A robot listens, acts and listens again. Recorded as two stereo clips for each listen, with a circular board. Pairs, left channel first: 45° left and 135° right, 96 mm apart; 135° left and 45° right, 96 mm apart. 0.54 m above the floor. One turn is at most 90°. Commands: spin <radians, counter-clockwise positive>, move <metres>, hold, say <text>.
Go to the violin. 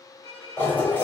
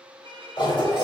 spin -0.70
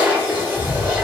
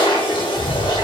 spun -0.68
hold
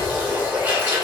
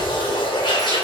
hold
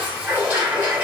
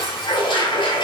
say Facing where the violin came from. I can't hear it now. I did not reach it.